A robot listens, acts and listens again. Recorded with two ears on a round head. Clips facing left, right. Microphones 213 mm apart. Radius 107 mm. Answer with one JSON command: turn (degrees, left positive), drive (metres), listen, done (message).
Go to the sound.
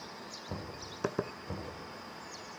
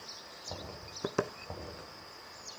{"turn": 35}
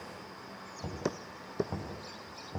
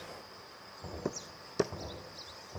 {"turn": 110}
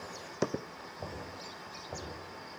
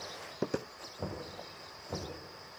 {"turn": -30}
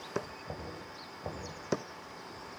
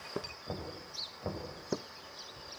{"turn": -15}
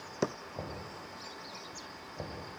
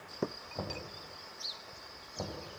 {"drive": 1.0}
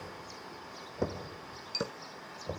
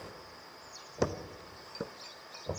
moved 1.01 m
{"drive": 1.0}
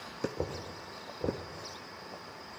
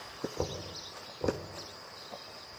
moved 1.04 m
{"drive": 1.0}
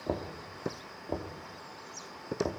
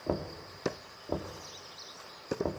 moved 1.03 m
{"drive": 1.0}
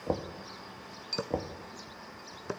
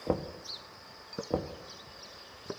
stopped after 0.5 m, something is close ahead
{"turn": -10}
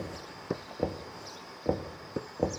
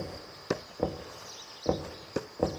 {"done": "Arrived at the knocking, straight ahead."}